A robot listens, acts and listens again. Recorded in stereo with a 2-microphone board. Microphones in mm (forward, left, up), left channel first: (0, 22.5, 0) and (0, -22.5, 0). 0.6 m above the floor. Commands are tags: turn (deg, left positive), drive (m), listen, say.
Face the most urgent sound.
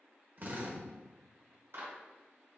<listen/>
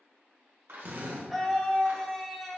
<turn deg="30"/>
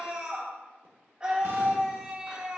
<turn deg="-25"/>
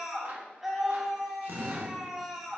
<turn deg="-10"/>
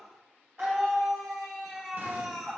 <say>Found it: a scream, straight ahead.</say>